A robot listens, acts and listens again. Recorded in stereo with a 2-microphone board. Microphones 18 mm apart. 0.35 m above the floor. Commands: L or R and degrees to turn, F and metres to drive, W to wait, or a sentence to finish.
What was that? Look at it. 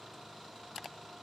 W
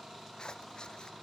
L55
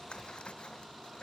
L70
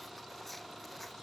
Facing the scissors.